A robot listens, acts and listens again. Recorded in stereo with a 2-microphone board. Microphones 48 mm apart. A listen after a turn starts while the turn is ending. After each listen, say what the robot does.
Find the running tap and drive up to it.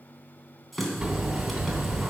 Turn 30° left.
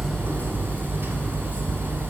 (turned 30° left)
Keep listening.
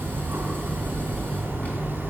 Keep listening.
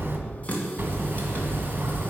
Turn 150° left.
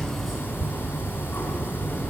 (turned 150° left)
Keep listening.
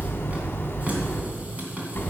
Turn 35° right.
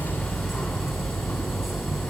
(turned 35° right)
Keep listening.
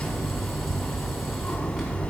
Keep listening.
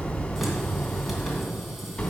I heard a running tap from this way, but can't make it out now. I did not reach it.